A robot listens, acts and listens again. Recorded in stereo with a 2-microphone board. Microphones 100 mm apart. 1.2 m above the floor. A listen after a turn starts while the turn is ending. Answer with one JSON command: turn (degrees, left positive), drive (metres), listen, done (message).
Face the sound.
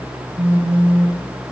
{"turn": -90}
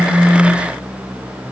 {"listen": true}
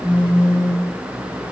{"turn": -10}
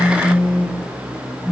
{"done": "Found it: a phone buzzing, straight ahead."}